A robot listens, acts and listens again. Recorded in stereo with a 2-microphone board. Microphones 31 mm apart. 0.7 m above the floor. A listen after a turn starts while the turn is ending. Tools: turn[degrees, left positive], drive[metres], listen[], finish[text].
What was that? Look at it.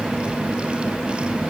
Action: listen[]
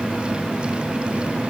Action: listen[]
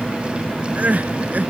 Thought: The crying: about 55° right or 125° right.
Action: turn[-55]
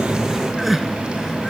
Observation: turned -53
Action: finish[Facing the crying.]